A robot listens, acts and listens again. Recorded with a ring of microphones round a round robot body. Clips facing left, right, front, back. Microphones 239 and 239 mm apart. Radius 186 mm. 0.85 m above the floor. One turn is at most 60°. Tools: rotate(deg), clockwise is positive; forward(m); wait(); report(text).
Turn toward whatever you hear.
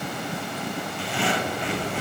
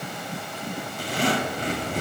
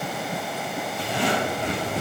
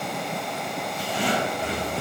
rotate(40)
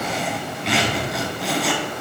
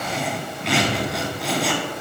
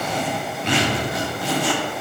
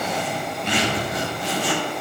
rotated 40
report("Found it: a zipper, straight ahead.")